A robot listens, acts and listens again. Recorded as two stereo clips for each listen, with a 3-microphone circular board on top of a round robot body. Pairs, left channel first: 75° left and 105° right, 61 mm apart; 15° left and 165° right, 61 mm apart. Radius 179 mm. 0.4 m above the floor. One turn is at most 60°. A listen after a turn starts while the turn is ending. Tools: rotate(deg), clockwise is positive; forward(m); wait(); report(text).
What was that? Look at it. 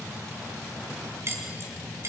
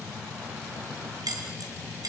rotate(60)
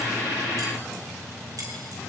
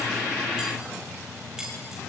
rotate(60)
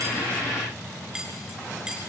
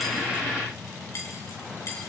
rotate(30)
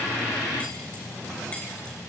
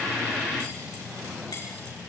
report("Facing where the keys jangling came from. I can't hear it now.")